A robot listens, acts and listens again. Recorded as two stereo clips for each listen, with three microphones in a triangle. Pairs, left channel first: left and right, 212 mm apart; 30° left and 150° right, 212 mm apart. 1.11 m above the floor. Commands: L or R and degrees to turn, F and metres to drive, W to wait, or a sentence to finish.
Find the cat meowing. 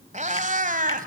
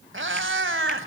R140
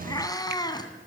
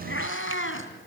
L20
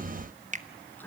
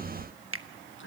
L10
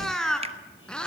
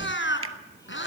Found it: a cat meowing, straight ahead, 2 to 4 m away.